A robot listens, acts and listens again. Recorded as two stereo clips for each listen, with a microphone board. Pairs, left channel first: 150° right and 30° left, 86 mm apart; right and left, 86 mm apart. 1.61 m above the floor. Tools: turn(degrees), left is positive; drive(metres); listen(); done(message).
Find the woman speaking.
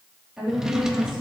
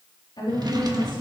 turn(degrees=-50)
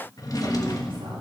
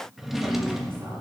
listen()
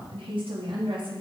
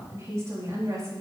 turn(degrees=40)
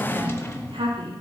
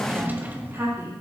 turn(degrees=30)
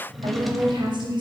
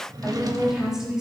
done("Facing the woman speaking.")